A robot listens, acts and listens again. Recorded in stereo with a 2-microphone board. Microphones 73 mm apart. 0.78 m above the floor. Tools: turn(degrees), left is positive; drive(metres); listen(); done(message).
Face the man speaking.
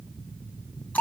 listen()
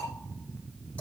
listen()
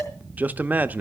turn(degrees=-20)
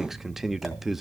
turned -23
done("Found it: a man speaking, straight ahead.")